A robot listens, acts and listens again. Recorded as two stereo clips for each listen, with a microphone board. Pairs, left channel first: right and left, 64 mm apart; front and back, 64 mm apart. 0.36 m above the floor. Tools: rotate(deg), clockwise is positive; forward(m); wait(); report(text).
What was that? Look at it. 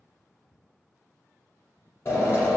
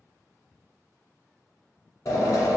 rotate(40)
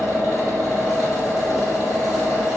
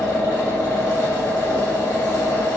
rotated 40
report("Facing the drill, 1 to 2 m away.")